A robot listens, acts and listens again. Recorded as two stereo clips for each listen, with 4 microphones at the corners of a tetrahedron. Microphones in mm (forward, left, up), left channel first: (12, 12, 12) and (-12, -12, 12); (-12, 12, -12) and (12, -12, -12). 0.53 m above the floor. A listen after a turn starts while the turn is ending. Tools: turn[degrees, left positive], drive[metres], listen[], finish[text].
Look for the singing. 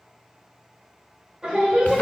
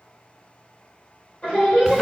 Thought: The singing: 170° left.
Action: turn[170]
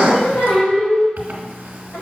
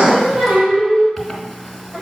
Thought: The singing is now 10° left.
Action: turn[10]
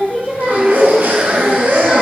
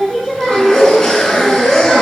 Thought: The singing is now 10° left.
Action: turn[10]
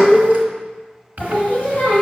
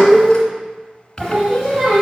Action: finish[Facing the singing, 2 to 4 m away.]